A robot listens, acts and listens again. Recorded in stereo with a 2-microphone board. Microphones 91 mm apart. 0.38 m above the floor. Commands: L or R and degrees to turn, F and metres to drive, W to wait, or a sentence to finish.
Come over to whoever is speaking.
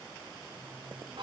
W
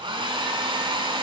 W
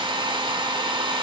I can't make out anyone speaking to turn to.